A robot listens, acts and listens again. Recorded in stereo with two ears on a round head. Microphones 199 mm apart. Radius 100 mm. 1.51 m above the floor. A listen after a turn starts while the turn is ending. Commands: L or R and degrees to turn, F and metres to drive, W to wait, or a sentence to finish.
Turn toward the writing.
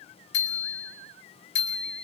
W
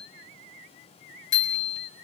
W
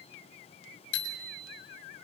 I can't make out writing to turn to.